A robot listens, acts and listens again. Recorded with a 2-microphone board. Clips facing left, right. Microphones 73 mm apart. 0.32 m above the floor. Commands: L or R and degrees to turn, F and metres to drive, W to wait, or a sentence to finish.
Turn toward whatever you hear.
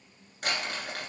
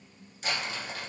L55
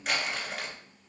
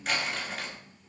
Facing the crumpling.